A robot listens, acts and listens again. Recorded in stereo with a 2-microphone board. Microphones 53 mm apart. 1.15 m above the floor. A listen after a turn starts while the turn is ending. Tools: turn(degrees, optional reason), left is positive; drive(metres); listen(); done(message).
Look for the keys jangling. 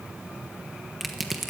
listen()
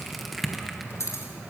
turn(degrees=65, reason="The keys jangling: about 65° left or 115° left.")
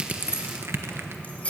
turn(degrees=25, reason="So it is at 25° left.")
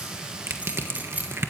turn(degrees=-30, reason="The keys jangling is now 30° right.")
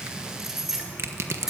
turn(degrees=-10, reason="The keys jangling is now 10° right.")
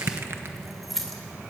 done("Found it: keys jangling, straight ahead.")